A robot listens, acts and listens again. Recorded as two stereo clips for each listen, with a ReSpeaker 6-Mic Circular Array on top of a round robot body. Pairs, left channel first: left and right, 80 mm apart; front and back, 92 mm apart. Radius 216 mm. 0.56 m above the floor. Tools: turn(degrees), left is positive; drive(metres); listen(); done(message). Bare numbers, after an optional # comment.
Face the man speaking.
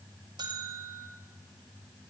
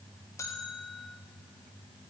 listen()
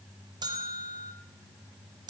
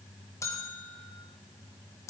listen()
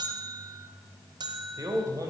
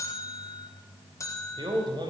# The man speaking: 140° right.
turn(-140)
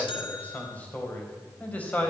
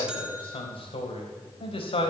# The man speaking is now 15° left.
turn(15)
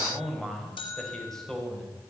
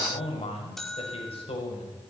done("Found it: a man speaking, straight ahead.")